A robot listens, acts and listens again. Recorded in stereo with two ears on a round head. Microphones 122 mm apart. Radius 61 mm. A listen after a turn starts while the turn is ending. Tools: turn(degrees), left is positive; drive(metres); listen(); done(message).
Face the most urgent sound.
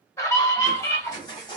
turn(degrees=25)
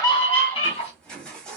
turn(degrees=125)
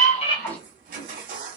listen()
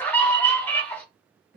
turn(degrees=15)
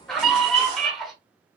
done("Facing the scream.")